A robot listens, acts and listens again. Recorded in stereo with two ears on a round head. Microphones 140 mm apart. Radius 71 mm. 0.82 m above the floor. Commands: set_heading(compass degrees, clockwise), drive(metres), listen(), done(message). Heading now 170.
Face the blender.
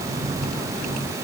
listen()
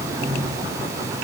listen()
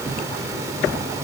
done("I can't make out a blender.")